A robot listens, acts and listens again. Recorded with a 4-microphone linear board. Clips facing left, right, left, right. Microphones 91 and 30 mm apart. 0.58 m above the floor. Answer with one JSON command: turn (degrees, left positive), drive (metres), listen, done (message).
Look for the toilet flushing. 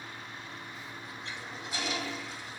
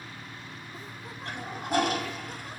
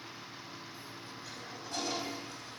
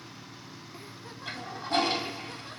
{"turn": -50}
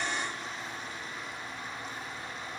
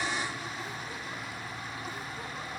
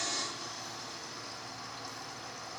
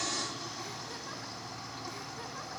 {"done": "Found it: a toilet flushing, straight ahead."}